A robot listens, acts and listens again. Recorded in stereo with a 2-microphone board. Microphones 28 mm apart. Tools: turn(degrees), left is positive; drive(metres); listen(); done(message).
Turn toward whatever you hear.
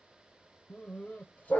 turn(degrees=60)
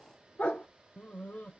turn(degrees=80)
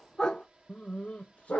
turn(degrees=55)
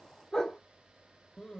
turn(degrees=15)
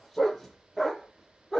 done("Facing the dog barking, 1 to 2 m away.")